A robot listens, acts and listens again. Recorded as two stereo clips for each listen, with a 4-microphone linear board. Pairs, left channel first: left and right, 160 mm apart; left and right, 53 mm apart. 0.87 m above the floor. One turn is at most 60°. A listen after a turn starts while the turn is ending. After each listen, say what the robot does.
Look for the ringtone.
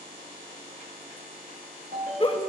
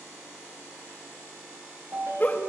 Turn 60° right.
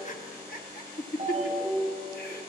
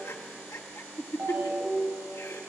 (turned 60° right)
Turn 40° right.
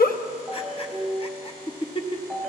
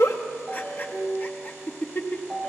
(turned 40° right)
Found it: a ringtone, straight ahead.